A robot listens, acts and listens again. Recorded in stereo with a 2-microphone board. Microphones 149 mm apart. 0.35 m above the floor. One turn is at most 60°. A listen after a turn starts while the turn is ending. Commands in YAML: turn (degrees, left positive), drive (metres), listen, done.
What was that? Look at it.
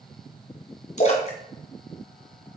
turn: 50
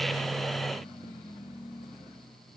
listen: true
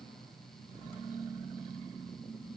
done: "I heard a splash, but can't make it out now. It was about straight ahead or 80° left."